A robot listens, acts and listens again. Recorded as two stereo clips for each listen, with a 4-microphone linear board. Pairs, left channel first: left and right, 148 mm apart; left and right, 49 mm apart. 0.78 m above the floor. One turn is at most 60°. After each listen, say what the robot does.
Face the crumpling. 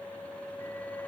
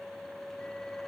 Keep listening.
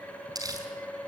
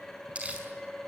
Turn 25° right.
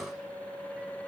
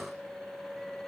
Keep listening.
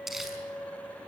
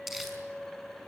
Found it: crumpling, straight ahead, over 4 m away.